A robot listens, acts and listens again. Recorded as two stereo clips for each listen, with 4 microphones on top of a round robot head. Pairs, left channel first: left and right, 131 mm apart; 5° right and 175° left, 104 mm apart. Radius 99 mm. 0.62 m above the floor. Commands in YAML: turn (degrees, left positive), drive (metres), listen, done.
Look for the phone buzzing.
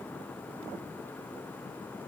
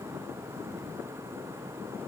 listen: true
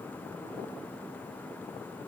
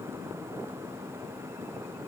listen: true
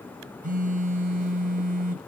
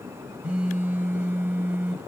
turn: -105
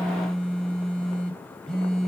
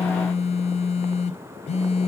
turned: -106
done: "Facing the phone buzzing."